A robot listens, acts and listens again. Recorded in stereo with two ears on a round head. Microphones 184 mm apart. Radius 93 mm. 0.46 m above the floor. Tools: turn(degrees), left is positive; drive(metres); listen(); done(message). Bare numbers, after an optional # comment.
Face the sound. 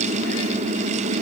listen()
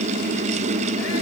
listen()
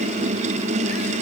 done("I can't make out anything.")